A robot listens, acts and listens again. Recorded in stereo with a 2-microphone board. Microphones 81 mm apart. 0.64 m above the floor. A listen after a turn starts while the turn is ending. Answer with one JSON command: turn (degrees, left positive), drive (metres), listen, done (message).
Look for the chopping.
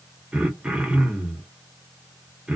{"listen": true}
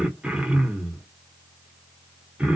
{"listen": true}
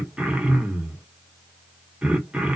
{"done": "I can't make out chopping, only throat clearing."}